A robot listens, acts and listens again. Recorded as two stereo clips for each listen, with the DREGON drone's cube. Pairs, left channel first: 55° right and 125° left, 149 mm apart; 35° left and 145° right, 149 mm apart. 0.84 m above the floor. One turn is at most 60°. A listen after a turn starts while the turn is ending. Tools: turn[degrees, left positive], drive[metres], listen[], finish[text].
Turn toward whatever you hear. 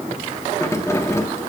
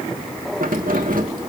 Thought: The keys jangling: 125° right.
Action: turn[-60]
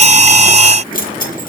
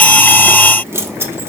Thought: The keys jangling is now 70° right.
Action: turn[-60]
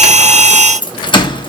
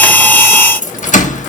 Action: finish[Found it: keys jangling, straight ahead, 1 to 2 m away.]